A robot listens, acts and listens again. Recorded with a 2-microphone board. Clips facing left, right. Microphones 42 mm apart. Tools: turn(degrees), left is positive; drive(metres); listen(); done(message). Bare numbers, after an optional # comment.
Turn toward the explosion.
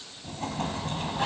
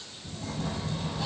# The explosion: about 60° left or 120° left.
turn(60)
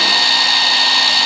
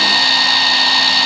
listen()
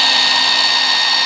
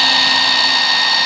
done("I heard an explosion, but can't make it out now. It was about straight ahead or 60° left.")